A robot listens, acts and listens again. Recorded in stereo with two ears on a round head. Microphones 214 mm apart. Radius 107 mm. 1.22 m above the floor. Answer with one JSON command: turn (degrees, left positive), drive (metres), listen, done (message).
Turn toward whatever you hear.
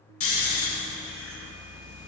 {"turn": 60}
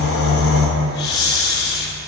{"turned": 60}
{"turn": 50}
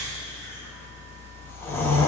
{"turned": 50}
{"turn": 10}
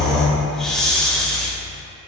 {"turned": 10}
{"done": "Found it: snoring, straight ahead."}